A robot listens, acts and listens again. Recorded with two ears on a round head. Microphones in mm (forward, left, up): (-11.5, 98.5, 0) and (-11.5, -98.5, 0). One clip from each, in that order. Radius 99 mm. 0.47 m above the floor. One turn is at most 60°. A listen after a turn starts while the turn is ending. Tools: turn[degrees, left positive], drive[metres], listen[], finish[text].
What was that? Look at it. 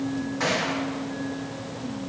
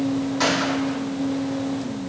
Thought: The gunshot: about 75° right or 105° right.
Action: turn[-60]
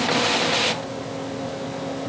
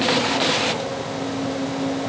Action: listen[]
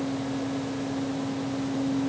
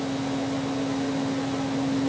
Action: finish[I heard a gunshot, but can't make it out now. It was about 15° right or 45° right.]